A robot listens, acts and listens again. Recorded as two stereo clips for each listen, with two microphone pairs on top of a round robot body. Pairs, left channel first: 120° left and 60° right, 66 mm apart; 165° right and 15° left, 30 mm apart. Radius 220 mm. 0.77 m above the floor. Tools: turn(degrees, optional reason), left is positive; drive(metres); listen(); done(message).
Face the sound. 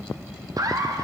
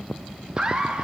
turn(degrees=-55, reason="The laughter: 55° right.")
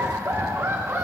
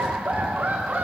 turn(degrees=-15, reason="The laughter is now 15° right.")
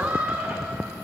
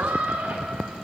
done("Found it: laughter, straight ahead.")